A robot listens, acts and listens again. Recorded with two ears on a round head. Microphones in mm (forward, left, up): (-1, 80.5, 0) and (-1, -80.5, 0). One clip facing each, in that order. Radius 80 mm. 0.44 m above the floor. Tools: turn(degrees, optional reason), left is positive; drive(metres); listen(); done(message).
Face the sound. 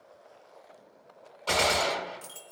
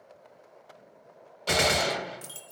turn(degrees=-30)
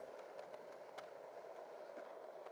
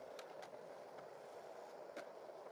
listen()
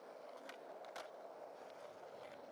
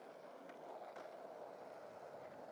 done("I heard a gunshot, but can't make it out now. It was about 15° left or 135° right.")